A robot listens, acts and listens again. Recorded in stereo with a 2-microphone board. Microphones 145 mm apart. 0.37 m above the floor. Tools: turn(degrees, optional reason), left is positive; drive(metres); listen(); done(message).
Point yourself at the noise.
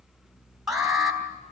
turn(degrees=-30)
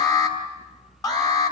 turn(degrees=30, reason="So it is at 30° left.")
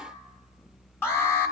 turn(degrees=20, reason="The alarm is now 20° left.")
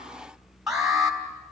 done("Facing the alarm, 2 to 4 m away.")